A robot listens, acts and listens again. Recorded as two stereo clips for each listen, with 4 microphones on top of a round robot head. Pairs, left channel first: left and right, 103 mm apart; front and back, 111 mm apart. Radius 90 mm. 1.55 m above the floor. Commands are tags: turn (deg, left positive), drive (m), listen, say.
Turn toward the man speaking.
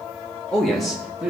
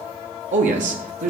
<turn deg="-175"/>
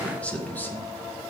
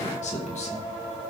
<turn deg="15"/>
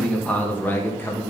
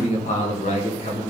<turn deg="20"/>
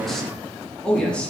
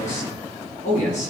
<turn deg="10"/>
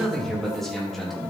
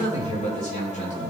<say>Facing the man speaking.</say>